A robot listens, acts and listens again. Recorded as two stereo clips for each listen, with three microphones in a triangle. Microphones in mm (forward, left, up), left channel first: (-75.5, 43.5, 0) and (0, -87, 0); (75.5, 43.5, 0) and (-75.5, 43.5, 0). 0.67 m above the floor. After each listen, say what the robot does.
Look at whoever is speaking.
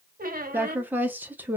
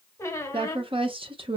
Turn 135° right.
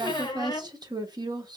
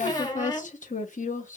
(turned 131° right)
Facing the woman speaking.